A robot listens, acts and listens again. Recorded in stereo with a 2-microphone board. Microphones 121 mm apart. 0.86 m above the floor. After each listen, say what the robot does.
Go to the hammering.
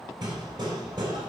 Turn 40° right.
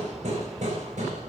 Turn 100° right.
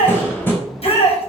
Turn 20° left.
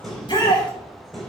Drive 1.0 m forward.
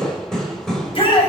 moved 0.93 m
Drive 1.0 m forward.
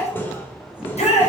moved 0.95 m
Turn 20° left.
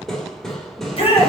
Drive 1.0 m forward.
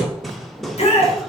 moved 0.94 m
Drive 1.0 m forward.
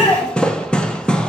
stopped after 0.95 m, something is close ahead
Turn 10° left.
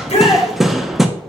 I am next to the hammering.